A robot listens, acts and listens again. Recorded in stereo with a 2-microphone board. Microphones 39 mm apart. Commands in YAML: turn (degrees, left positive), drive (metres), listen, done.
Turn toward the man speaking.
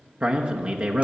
turn: -35
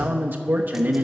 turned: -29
turn: -115
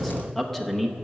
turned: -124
turn: 10
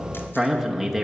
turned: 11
done: "Found it: a man speaking, straight ahead, under 1 m away."